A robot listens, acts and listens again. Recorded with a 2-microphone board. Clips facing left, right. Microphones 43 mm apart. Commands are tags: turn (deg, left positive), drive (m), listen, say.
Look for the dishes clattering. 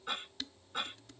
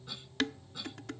<turn deg="-70"/>
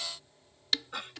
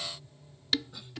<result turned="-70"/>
<say>Found it: dishes clattering, straight ahead.</say>